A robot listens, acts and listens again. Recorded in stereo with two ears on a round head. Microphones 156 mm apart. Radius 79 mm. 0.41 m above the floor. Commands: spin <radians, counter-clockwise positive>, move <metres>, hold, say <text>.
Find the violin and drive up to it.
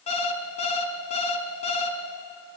hold
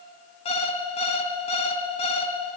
hold
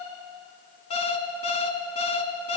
say I can't make out a violin, only an alarm clock.